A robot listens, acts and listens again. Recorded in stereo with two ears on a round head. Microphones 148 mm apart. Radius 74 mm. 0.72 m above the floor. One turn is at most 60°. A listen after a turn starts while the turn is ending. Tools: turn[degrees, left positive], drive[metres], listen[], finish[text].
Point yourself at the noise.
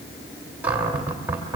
Action: turn[-30]
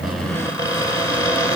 Thought: So it is at 20° left.
Action: turn[20]
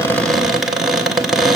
Action: finish[Facing the cupboard door, 2 to 4 m away.]